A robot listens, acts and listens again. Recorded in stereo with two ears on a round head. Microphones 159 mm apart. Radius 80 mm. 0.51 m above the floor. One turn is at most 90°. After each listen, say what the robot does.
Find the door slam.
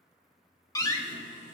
Turn 20° left.
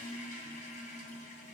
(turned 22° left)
Keep listening.
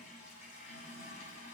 I heard a door slam, but can't make it out now. It was about straight ahead or 140° left.